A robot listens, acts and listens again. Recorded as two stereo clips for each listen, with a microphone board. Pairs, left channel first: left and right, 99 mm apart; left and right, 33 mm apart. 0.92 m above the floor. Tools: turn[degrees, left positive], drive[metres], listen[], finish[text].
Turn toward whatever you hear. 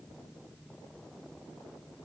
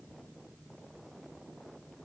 Action: listen[]
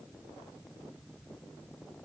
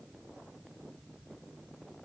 Action: listen[]
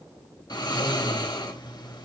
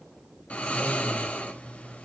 Thought: The snoring: about 45° left or 135° left.
Action: turn[45]
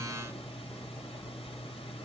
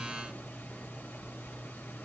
Thought: So it is at 90° left.
Action: turn[90]
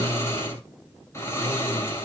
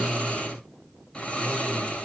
Thought: The snoring is now 30° left.
Action: turn[30]
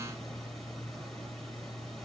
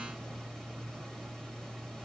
Action: finish[Facing the snoring.]